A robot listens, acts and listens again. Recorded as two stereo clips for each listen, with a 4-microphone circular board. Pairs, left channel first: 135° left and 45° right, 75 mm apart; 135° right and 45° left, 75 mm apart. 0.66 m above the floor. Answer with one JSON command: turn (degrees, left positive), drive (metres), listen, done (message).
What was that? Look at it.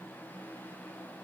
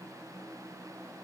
{"listen": true}
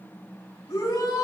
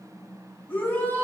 {"turn": 165}
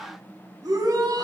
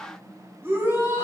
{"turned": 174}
{"turn": -10}
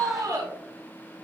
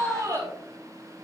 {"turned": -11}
{"done": "Found it: a shout, straight ahead, 2 to 4 m away."}